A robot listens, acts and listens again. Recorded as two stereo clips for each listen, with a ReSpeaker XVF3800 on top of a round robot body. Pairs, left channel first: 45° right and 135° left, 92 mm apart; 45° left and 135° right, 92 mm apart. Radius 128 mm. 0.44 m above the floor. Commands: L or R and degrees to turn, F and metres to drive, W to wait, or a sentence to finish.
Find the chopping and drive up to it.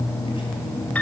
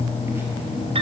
W
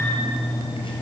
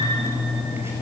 W
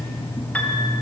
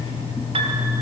I can't make out chopping.